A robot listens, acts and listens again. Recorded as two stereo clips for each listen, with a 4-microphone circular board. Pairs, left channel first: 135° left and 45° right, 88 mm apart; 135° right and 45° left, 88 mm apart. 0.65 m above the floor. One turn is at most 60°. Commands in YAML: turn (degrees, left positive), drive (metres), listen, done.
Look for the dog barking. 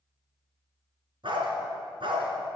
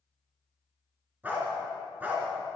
turn: -25
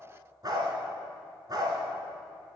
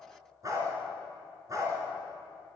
done: "Facing the dog barking."